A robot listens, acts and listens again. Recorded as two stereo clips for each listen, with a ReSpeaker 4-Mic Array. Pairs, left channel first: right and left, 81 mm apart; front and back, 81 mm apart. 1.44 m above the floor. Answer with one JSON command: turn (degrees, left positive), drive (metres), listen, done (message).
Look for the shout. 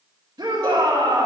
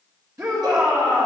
{"turn": 130}
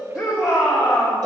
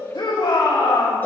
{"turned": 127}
{"done": "Found it: a shout, straight ahead."}